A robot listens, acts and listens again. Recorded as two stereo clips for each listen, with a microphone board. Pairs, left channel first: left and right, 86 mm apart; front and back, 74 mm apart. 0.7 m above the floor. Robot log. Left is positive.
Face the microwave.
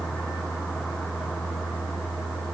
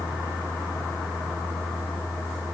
cmd idle
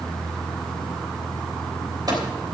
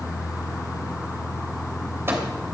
note: The microwave: 125° right.
cmd yaw -125
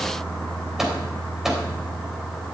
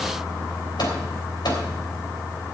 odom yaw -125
end: Found it: a microwave, straight ahead, 2 to 4 m away.